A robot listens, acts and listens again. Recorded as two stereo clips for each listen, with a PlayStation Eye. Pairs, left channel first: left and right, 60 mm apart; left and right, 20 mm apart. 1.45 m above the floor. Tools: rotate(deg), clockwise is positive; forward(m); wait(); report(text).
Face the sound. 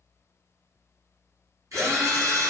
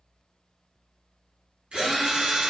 rotate(60)
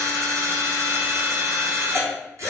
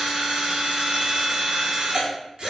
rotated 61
rotate(50)
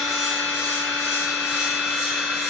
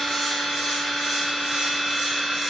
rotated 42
rotate(10)
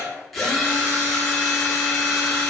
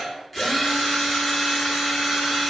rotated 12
report("Found it: a drill, straight ahead, under 1 m away.")